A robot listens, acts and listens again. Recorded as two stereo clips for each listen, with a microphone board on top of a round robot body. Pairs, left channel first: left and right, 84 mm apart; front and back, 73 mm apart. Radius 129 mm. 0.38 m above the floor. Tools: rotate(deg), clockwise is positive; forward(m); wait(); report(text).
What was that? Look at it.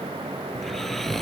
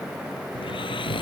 report("Facing the snoring.")